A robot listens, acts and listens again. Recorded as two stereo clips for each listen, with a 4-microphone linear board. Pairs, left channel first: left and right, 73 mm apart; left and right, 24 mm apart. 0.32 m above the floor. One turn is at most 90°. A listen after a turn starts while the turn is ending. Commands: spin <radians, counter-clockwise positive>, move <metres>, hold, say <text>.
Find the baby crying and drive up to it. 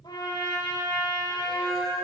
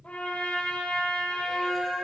hold
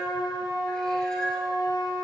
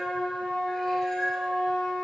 hold
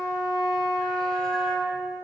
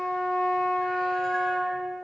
say I can't make out a baby crying to turn to.